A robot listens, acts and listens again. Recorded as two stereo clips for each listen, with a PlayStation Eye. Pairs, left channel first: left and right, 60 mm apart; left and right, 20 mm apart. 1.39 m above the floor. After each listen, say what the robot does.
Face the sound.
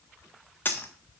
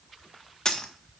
Turn 35° left.
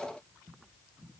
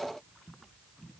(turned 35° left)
Keep listening.
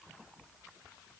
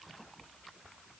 I heard a dropped coin, but can't make it out now. It was about straight ahead or 110° left.